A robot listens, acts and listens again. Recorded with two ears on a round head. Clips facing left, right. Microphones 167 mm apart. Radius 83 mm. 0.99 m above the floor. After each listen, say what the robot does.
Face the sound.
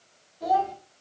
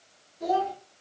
Turn 30° right.
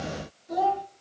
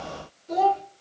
Turn 125° right.
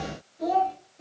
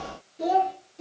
Turn 65° right.
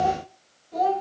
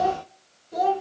Turn 30° right.
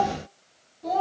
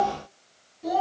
Facing the child speaking, 1 to 2 m away.